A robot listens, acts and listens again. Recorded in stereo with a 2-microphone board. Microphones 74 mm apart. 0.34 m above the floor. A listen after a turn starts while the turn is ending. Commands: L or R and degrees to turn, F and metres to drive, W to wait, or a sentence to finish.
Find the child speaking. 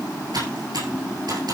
W
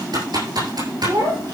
R90
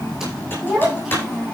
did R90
Facing the child speaking.